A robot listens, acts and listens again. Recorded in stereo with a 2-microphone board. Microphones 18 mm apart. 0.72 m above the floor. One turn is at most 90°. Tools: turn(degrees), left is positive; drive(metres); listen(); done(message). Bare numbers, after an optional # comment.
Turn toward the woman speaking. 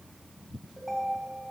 listen()
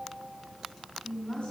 # The woman speaking: about 50° left or 130° left.
turn(50)
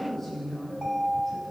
done("Found it: a woman speaking, straight ahead, over 4 m away.")